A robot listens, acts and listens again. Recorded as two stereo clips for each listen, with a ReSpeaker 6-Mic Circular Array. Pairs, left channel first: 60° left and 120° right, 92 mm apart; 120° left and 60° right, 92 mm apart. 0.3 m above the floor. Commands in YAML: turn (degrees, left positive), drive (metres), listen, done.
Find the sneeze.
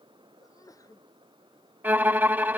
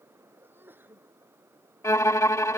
turn: 10
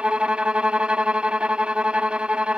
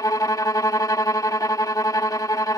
done: "I heard a sneeze from this way, but can't make it out now."